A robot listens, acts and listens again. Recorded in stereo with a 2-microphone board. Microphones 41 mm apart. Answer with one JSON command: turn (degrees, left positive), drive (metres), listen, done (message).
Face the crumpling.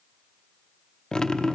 {"listen": true}
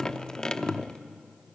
{"listen": true}
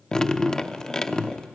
{"done": "I can't make out crumpling to turn to."}